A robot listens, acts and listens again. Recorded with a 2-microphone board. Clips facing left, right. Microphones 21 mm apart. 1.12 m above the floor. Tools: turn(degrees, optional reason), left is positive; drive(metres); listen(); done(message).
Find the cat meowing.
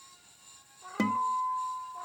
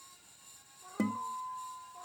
turn(degrees=65, reason="The cat meowing: about 65° left or 115° left.")
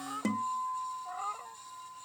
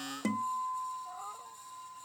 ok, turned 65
turn(degrees=80, reason="So it is at 80° left.")
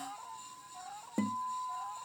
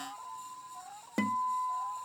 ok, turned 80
turn(degrees=15, reason="The cat meowing is now 15° left.")
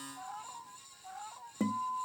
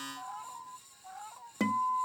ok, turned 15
done("Facing the cat meowing.")